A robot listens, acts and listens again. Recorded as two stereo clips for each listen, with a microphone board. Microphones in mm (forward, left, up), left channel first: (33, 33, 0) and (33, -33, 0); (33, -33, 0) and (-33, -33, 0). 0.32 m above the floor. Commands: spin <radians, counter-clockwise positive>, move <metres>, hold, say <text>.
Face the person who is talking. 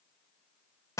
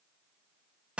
hold
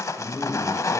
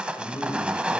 spin 0.44
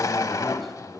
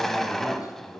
say Found it: a man speaking, straight ahead.